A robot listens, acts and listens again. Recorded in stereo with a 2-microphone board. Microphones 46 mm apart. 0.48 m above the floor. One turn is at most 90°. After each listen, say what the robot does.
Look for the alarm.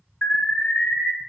Turn 35° left.
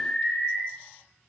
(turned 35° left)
Found it: an alarm, straight ahead, 1 to 2 m away.